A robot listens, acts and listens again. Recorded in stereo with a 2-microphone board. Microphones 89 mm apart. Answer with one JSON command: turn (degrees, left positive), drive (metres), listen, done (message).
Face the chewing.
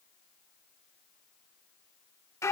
{"listen": true}
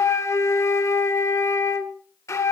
{"listen": true}
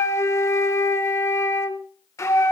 {"done": "I can't make out chewing, only a flute."}